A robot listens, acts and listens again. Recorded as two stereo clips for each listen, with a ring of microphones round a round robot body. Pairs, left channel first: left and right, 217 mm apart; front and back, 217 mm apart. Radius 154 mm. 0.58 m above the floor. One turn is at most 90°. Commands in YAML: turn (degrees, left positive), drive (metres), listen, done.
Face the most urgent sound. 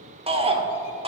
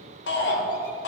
turn: -30
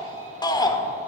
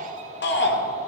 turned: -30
turn: 20
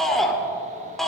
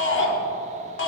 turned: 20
done: "Facing the shout."